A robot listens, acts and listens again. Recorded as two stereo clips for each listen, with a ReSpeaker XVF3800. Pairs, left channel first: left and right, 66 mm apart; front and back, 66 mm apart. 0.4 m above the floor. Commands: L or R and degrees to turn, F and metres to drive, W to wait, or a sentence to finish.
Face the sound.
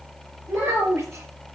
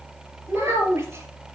R135
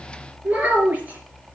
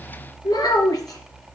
R20
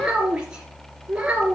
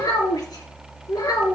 R20
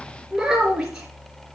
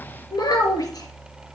Found it: a child speaking, straight ahead.